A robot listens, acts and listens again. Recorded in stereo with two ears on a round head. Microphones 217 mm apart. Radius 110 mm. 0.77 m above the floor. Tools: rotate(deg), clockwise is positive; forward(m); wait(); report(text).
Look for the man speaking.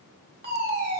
wait()
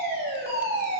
wait()
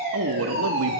rotate(55)
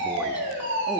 wait()
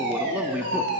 report("Found it: a man speaking, straight ahead.")